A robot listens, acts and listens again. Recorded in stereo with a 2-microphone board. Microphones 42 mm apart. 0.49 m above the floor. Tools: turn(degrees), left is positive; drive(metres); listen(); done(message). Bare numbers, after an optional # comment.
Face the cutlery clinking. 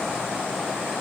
listen()
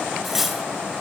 turn(-30)
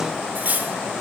# So it is at 135° right.
turn(-135)
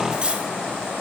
# The cutlery clinking is now 20° right.
turn(-20)
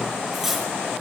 done("Facing the cutlery clinking.")